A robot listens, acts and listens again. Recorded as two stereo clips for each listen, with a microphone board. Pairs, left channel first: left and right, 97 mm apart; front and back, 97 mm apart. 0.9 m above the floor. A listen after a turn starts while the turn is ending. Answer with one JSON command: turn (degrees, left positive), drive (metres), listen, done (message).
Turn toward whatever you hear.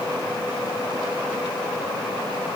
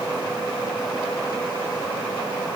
{"listen": true}
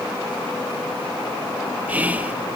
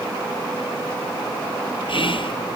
{"turn": -15}
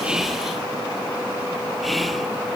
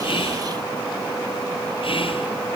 {"done": "Found it: whispering, straight ahead, 1 to 2 m away."}